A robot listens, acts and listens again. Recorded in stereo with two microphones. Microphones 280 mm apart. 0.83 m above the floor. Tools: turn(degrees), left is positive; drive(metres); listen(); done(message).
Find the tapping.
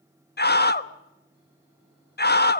listen()
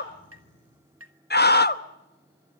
turn(degrees=-55)
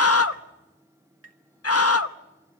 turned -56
turn(degrees=-60)
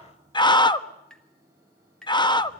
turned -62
done("Found it: tapping, straight ahead.")